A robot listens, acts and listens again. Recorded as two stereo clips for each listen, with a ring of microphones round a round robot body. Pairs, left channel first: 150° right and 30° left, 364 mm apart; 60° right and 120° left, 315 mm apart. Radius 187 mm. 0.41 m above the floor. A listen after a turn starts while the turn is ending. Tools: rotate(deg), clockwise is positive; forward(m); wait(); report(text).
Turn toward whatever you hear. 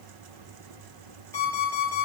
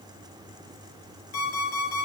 rotate(65)
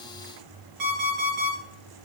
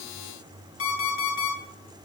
rotate(10)
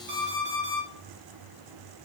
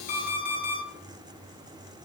report("Facing the alarm clock, 2 to 4 m away.")